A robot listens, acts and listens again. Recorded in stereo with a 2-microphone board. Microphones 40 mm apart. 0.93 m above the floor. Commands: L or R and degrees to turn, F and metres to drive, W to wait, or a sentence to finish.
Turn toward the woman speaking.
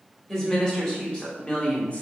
L30
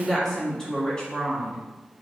L20
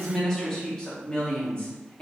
L25
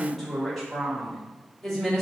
Facing the woman speaking.